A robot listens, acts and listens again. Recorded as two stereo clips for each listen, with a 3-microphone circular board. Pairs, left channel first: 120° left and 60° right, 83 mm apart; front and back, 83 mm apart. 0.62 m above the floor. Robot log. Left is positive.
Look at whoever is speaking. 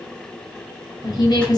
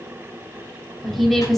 note: The woman speaking: 90° left.
cmd yaw +90
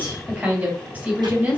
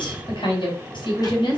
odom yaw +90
note: The woman speaking is now 10° left.
cmd yaw +10
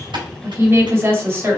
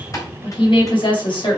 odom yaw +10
end: Facing the woman speaking.